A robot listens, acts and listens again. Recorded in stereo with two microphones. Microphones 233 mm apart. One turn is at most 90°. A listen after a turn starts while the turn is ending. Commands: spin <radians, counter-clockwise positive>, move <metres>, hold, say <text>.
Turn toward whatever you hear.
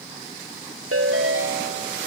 spin -1.22
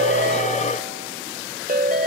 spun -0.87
spin -0.70
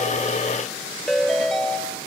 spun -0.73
say Facing the ringtone.